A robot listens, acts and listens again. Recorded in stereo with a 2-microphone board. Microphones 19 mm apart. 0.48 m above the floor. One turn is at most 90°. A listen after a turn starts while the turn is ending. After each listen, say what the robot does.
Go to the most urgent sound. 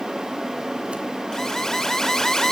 Turn 25° left.
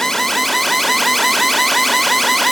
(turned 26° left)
Drive 1.0 m forward.
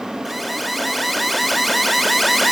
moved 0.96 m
Drive 1.0 m forward.
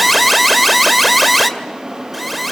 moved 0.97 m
Drive 1.0 m forward.
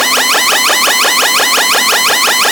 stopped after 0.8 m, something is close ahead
Turn 10° left.
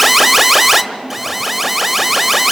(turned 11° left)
I am next to the alarm.